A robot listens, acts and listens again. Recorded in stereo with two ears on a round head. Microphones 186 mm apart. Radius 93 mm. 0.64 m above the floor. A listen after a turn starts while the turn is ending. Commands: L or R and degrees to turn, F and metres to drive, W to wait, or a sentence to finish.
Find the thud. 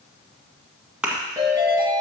R30
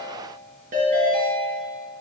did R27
W
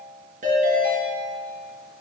I heard a thud, but can't make it out now. It was about 20° left or 150° right.